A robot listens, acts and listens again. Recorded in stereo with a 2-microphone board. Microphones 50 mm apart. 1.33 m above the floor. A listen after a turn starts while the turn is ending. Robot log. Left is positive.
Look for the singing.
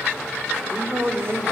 note: The singing: about 60° right or 120° right.
cmd yaw -60
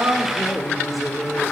end: Found it: singing, straight ahead, over 4 m away.